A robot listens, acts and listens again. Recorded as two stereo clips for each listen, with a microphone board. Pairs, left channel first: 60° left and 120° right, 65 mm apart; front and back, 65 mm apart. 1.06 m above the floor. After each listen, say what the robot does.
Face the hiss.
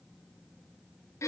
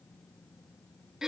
Keep listening.
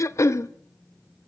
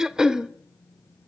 Keep listening.
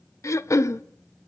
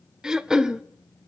I can't make out a hiss, only throat clearing.